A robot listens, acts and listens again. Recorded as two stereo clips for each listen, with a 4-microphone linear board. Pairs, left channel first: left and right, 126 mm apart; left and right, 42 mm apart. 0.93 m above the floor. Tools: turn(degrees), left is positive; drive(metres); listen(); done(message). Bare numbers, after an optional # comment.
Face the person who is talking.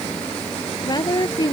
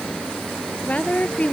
# The woman speaking: about 35° left or 145° left.
turn(35)
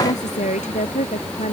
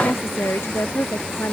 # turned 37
# So it is at 110° left.
turn(110)
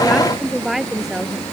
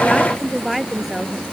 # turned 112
done("Facing the woman speaking.")